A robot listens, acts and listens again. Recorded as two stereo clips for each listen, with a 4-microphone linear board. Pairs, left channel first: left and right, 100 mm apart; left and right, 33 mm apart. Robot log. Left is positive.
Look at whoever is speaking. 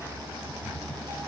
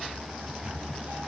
cmd idle
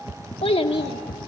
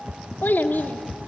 cmd yaw +90
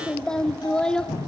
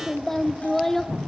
note: So it is at 10° left.
cmd yaw +10
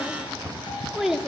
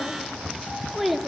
end: Facing the child speaking, 1 to 2 m away.